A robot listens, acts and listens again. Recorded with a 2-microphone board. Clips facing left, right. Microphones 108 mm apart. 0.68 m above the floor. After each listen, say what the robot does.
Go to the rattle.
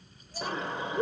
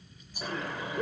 Turn 20° right.
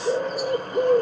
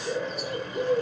Keep listening.
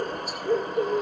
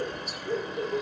Keep listening.
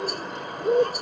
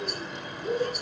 I heard a rattle, but can't make it out now. It was about straight ahead or 140° right. I did not reach it.